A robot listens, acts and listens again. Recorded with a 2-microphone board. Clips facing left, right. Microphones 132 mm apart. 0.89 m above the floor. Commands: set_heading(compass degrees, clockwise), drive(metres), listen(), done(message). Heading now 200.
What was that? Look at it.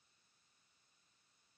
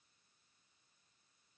listen()
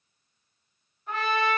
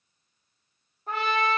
set_heading(245)
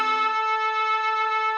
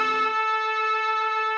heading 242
done("Facing the trumpet.")